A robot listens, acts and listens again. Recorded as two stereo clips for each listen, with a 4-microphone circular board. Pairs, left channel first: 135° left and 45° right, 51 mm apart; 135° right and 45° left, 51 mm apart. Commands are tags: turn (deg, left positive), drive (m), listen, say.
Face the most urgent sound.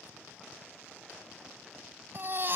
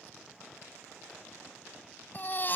<turn deg="-85"/>
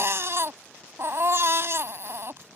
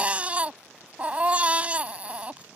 <turn deg="-20"/>
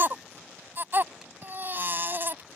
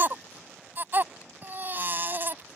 <say>Facing the baby crying.</say>